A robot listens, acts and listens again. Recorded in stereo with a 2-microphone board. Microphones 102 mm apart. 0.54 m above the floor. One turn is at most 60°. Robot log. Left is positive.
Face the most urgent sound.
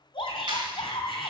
note: The shout: about 70° left or 110° left.
cmd yaw +60
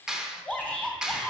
note: So it is at 15° left.
cmd yaw +15
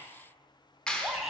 end: Facing the shout.